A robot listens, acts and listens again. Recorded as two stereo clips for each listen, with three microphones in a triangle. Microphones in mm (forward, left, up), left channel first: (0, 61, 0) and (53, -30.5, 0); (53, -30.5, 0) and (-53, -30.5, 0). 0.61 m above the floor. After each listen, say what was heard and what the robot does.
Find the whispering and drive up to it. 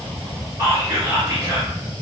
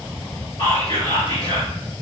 The whispering: 15° right. Turn 15° right.
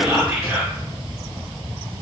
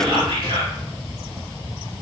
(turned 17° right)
Keep listening.
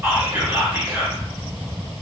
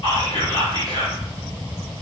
Drive 1.0 m forward.
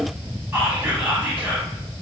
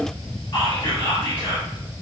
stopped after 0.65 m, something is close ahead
I am next to the whispering.